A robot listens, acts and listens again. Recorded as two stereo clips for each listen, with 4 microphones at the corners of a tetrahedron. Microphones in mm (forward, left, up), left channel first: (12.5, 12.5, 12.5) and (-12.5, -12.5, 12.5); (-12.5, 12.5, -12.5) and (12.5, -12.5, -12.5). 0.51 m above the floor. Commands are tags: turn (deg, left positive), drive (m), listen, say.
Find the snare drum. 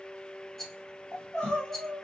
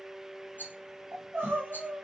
<listen/>
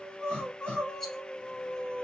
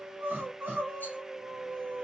<listen/>
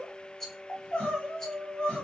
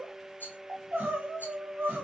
<say>I can't make out a snare drum, only crying and a rattle.</say>